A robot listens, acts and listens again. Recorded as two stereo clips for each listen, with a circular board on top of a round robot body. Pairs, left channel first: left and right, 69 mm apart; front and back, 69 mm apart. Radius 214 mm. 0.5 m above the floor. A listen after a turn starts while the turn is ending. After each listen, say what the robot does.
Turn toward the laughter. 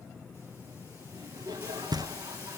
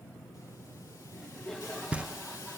Turn 85° right.
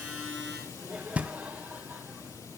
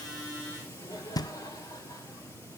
Turn 20° right.
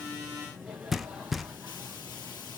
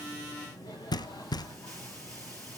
Facing the laughter, over 4 m away.